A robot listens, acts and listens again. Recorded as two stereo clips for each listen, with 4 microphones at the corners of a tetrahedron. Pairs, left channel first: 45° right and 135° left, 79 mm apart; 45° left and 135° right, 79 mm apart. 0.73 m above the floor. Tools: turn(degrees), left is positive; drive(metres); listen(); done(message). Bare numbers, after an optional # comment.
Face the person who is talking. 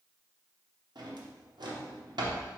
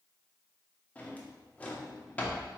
listen()
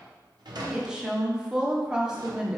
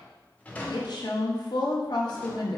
# The woman speaking: 55° left.
turn(55)
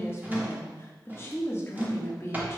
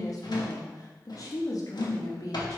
# The woman speaking is now 10° left.
turn(10)
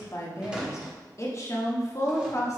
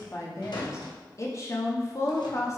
done("Found it: a woman speaking, straight ahead, under 1 m away.")